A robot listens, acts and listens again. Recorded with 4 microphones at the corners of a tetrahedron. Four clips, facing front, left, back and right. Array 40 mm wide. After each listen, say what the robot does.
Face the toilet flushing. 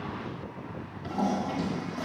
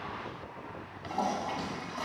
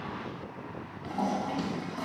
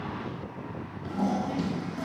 Turn 105° left.
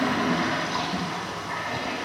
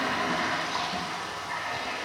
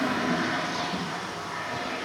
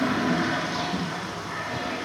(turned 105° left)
Turn 35° left.
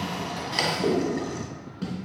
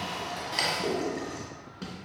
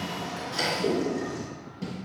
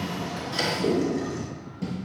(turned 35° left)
Turn 15° left.
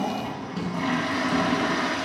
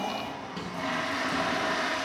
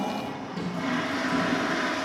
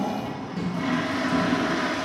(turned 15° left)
Found it: a toilet flushing, straight ahead, 1 to 2 m away.